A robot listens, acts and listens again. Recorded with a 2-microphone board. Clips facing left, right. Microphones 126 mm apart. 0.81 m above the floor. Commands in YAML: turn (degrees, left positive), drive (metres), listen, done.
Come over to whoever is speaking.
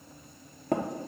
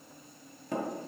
listen: true
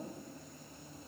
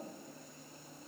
listen: true
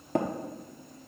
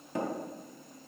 done: "I can't make out anyone speaking, only tapping."